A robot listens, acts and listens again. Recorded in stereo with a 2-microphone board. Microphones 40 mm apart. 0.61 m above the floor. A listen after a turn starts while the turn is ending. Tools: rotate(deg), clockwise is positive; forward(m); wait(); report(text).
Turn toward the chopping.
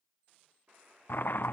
rotate(-60)
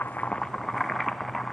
report("Facing the chopping, under 1 m away.")